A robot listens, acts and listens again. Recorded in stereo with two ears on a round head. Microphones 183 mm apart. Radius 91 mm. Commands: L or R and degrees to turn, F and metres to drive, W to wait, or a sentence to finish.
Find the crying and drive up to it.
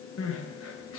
L70
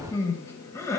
L15
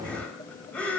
F1.0
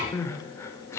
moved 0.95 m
L15
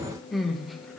F1.0
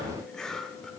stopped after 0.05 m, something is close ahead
W
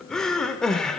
Arrived at the crying, straight ahead.